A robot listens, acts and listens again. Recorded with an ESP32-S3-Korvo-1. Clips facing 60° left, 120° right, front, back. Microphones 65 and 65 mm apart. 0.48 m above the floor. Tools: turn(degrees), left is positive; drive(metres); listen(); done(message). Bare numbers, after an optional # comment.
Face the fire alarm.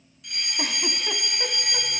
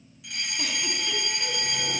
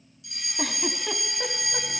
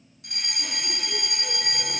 # The fire alarm: 155° left.
turn(155)
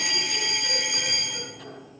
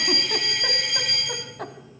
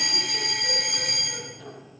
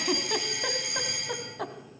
# The fire alarm is now 20° right.
turn(-20)
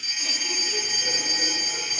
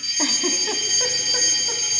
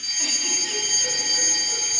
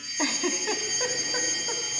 done("Found it: a fire alarm, straight ahead, over 4 m away.")